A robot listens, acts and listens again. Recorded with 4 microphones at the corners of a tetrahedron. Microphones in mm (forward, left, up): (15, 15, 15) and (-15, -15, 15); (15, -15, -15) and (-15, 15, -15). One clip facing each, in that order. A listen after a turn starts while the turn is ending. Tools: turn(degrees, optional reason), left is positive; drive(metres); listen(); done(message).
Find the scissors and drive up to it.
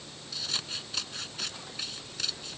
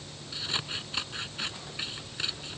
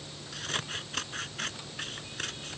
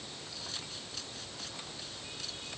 turn(degrees=-70, reason="The scissors: 70° right.")
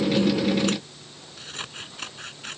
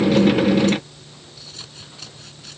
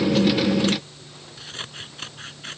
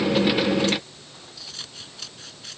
drive(metres=1.0)
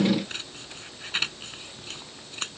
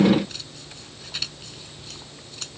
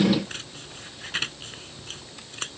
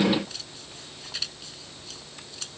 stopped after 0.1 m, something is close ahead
done("Something is in my way. I am facing the scissors but have not reached it.")